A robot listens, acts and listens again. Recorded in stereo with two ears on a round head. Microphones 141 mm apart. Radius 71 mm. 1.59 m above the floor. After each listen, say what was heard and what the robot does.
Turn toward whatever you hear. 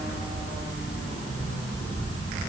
Keep listening.
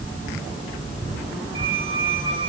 The squeak: about 35° right or 145° right. Turn 35° right.
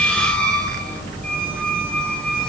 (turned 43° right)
Found it: a squeak, straight ahead, 2 to 4 m away.